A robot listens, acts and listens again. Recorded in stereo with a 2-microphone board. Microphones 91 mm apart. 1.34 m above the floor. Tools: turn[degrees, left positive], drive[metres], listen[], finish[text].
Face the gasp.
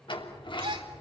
Thought: The gasp: about 60° right or 120° right.
Action: turn[-60]
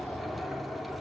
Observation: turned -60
Action: listen[]
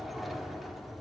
Action: finish[I heard a gasp, but can't make it out now. It was about straight ahead or 60° right.]